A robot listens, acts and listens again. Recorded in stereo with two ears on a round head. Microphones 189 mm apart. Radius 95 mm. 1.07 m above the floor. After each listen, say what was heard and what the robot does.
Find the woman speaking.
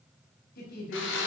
The woman speaking: about 50° left or 130° left. Turn 50° left.
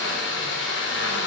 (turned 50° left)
Keep listening.
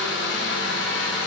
Keep listening.
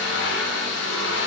I heard a woman speaking, but can't make it out now. It was about straight ahead or 80° left.